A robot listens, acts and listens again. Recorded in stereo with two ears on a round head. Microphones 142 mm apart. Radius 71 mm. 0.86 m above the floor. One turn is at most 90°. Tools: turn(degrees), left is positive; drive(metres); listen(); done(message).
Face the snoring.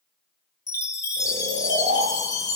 turn(degrees=-50)
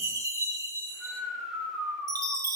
done("Facing the snoring.")